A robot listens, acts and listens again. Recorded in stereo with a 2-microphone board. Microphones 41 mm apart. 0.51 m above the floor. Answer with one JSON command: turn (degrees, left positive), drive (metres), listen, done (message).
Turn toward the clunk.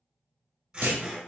{"turn": -70}
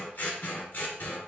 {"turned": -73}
{"listen": true}
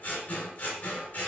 {"done": "I heard a clunk, but can't make it out now. It was about 5° left or 40° right."}